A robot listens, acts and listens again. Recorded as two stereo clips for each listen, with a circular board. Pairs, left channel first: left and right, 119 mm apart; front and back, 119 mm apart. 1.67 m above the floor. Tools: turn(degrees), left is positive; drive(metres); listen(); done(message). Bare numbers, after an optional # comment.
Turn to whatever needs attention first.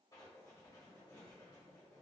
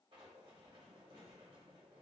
listen()
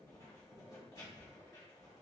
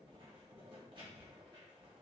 listen()
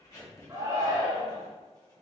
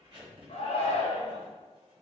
# The shout: 30° right.
turn(-30)
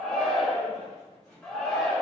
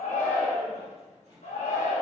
done("Facing the shout.")